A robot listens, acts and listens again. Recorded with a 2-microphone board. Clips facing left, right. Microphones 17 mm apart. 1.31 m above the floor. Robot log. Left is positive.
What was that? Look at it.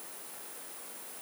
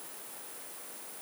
cmd idle
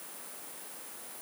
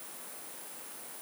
cmd idle
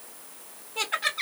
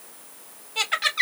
note: The laughter: about 75° right or 105° right.
cmd yaw -75
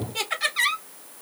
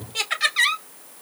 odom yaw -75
note: So it is at 25° right.
cmd yaw -25
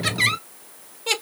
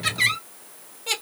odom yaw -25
note: The laughter is now 15° left.
cmd yaw +15
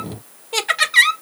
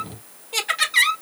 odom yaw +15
note: The laughter is now 15° left.
cmd yaw +15
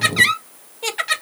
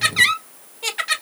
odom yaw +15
end: Facing the laughter.